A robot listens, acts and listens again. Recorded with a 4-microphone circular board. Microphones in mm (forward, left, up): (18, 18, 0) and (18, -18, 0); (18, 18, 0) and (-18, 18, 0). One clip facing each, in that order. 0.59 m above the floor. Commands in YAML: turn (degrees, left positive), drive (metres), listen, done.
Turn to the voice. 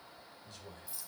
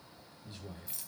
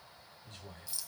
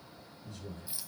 turn: -20
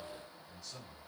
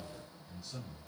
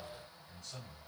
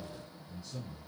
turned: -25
done: "Facing the man speaking."